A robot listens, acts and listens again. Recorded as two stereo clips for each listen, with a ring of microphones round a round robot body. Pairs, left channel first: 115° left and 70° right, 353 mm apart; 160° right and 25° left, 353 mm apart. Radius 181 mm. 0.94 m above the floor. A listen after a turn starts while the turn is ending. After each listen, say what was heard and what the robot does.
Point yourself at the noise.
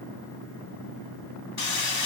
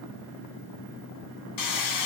The hammering: 165° left. Turn 165° left.
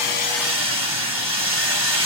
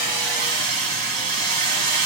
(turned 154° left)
The hammering is now 10° left. Turn 10° left.
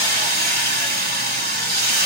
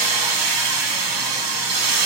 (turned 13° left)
Found it: hammering, straight ahead.